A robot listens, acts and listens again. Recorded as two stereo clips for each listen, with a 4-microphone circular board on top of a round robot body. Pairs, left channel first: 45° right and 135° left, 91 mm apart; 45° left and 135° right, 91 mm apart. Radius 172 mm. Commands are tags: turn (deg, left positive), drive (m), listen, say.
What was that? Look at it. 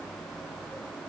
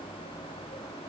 <listen/>
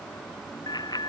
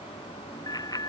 <say>Facing the bicycle bell.</say>